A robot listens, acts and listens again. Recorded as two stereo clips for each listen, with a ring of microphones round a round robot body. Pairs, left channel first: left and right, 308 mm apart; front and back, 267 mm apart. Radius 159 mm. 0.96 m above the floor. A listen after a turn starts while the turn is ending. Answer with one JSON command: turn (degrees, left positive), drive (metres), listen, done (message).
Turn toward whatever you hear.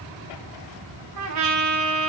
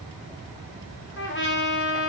{"turn": -55}
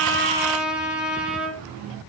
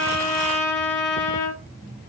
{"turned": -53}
{"done": "Found it: a trumpet, straight ahead, 1 to 2 m away."}